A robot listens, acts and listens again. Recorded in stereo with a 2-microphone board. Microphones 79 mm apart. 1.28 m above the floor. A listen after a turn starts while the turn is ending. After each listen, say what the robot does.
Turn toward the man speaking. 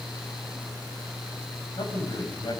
Turn 90° left.
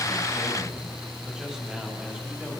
Keep listening.
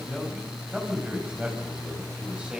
Turn 15° right.
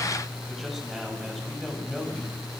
Facing the man speaking.